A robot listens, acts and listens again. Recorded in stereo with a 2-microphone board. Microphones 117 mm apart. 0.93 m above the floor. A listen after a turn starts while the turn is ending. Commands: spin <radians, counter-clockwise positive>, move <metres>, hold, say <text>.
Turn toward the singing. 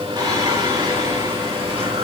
spin -0.87
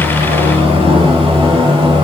spin -0.79
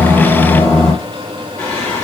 spin 0.26
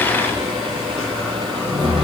say Found it: singing, straight ahead, 2 to 4 m away.